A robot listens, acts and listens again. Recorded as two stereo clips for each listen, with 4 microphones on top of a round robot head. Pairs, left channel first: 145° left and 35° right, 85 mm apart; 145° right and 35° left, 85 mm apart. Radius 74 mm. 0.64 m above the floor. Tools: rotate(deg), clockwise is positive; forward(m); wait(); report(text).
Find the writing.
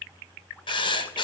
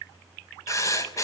rotate(-165)
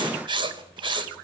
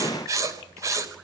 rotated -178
rotate(15)
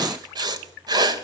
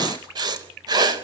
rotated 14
report("Found it: writing, straight ahead, 2 to 4 m away.")